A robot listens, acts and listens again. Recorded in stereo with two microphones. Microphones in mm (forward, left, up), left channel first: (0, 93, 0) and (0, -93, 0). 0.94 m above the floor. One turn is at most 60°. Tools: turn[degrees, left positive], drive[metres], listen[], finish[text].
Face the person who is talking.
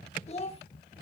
Thought: The child speaking: about 35° left or 145° left.
Action: turn[35]
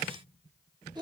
Thought: So it is at 25° right.
Action: turn[-25]
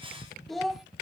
Action: finish[Found it: a child speaking, straight ahead.]